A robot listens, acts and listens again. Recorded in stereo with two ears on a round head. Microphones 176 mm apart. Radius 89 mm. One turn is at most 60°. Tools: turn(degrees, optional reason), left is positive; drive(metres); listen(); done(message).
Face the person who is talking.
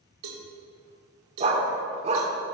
listen()
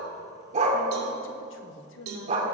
turn(degrees=60, reason="The woman speaking: about 65° left or 115° left.")
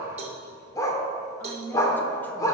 turn(degrees=10, reason="So it is at 10° left.")
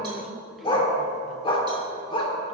listen()
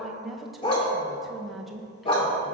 done("Found it: a woman speaking, straight ahead.")